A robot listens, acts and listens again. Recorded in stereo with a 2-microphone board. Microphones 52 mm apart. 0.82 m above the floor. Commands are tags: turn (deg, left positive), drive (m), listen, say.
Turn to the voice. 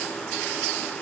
<listen/>
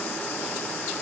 <listen/>
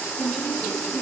<turn deg="30"/>
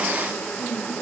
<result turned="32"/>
<turn deg="150"/>
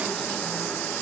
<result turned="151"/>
<listen/>
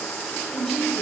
<turn deg="10"/>
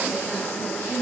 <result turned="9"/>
<say>Facing the woman speaking.</say>